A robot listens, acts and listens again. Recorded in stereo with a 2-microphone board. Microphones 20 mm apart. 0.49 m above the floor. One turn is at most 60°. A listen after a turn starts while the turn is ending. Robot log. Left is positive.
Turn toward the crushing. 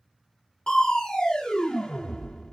note: The crushing: about 45° left or 135° left.
cmd yaw +45
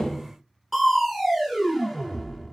end: Facing the crushing, under 1 m away.